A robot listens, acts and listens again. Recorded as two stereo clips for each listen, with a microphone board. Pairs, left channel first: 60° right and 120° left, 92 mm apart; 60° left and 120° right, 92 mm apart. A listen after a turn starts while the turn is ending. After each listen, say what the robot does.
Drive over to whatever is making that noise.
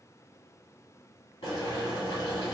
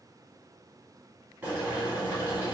Turn 50° right.
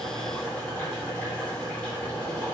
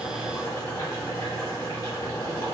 Turn 15° left.
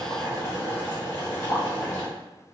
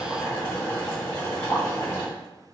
Drive 1.0 m forward.
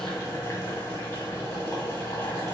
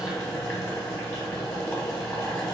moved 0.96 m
Drive 1.0 m forward.
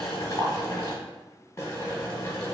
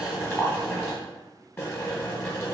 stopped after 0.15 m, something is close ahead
I am next to the boiling.